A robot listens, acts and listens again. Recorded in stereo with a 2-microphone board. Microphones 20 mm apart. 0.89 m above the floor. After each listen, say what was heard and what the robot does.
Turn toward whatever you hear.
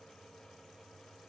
Keep listening.
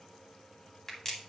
The crack: about 25° left or 155° left. Turn 25° left.
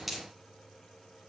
Facing the crack, 2 to 4 m away.